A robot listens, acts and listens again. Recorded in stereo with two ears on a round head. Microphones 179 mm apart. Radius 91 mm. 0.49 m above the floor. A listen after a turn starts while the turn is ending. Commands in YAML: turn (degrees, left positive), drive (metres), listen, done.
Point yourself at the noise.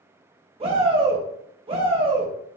turn: -30
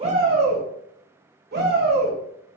turn: -115
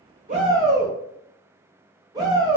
turn: -25
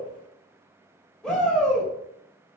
done: "Found it: a shout, straight ahead."